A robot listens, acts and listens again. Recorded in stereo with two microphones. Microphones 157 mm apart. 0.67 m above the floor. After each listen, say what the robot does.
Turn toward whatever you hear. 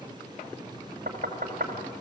Turn 65° right.
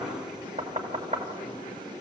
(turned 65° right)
Turn 50° right.
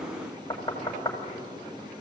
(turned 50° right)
Turn 20° left.
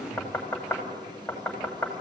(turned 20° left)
Turn 10° left.
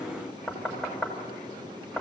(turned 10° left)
Facing the knocking.